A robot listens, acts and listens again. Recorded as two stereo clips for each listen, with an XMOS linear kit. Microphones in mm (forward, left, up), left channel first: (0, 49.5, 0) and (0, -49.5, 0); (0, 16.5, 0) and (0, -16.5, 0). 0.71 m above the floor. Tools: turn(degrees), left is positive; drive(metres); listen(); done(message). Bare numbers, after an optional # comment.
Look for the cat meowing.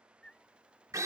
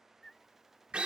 turn(30)
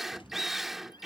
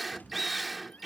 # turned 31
# So it is at 135° left.
turn(135)
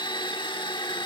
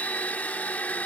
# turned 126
listen()
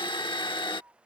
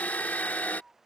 # The cat meowing is now 25° right.
turn(-25)
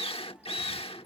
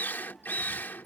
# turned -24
listen()
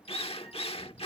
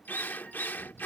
done("Found it: a cat meowing, straight ahead.")